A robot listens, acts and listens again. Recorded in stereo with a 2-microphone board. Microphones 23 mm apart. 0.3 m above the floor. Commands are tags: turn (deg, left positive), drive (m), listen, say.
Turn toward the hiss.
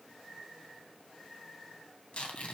<listen/>
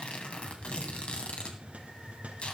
<turn deg="-90"/>
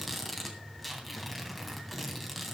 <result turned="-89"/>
<say>Facing the hiss, 2 to 4 m away.</say>